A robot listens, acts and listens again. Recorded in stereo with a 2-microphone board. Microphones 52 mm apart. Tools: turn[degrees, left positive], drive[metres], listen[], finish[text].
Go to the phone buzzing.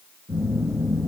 Thought: The phone buzzing: about 60° right or 120° right.
Action: turn[-60]
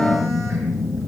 Action: drive[1.0]
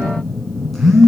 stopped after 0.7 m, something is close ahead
Action: finish[Blocked. The phone buzzing is further on, straight ahead.]